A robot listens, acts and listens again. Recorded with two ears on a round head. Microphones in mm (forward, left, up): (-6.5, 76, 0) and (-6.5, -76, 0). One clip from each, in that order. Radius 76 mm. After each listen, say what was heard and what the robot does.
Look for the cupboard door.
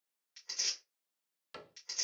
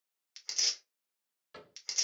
The cupboard door: about 50° left or 130° left. Turn 50° left.
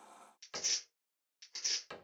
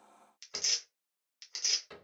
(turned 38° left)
So it is at 75° left. Turn 75° left.
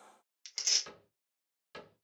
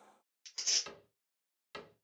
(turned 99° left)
The cupboard door is now 25° right. Turn 25° right.
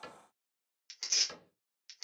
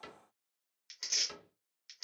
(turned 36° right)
The cupboard door is now 10° left. Turn 10° left.
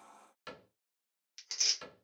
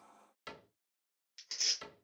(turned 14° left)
Facing the cupboard door.